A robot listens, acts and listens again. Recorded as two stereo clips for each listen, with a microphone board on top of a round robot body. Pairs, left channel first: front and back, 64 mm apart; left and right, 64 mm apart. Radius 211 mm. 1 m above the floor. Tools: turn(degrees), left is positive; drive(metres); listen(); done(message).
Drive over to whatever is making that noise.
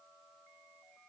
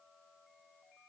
listen()
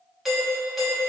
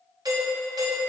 turn(degrees=-95)
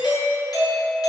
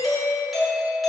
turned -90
drive(metres=1.0)
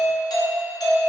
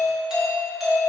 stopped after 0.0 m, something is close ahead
turn(degrees=-10)
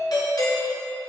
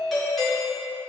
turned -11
done("Blocked. The doorbell is further on, straight ahead.")